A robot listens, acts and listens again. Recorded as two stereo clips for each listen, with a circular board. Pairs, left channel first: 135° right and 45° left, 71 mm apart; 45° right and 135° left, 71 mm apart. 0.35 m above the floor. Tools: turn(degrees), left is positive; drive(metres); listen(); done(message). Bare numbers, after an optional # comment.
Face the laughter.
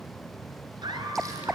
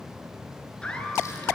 # The laughter: 30° left.
turn(30)
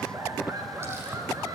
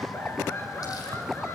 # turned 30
done("Facing the laughter, over 4 m away.")